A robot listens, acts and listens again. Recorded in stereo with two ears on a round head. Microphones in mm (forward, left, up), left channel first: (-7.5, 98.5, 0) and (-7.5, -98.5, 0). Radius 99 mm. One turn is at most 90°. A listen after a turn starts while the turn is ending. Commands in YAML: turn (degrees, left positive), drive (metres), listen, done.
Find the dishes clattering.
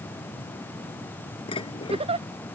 turn: 25
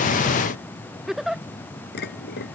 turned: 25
turn: 90
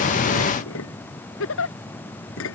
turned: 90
turn: 65
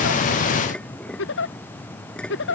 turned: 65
done: "Facing the dishes clattering."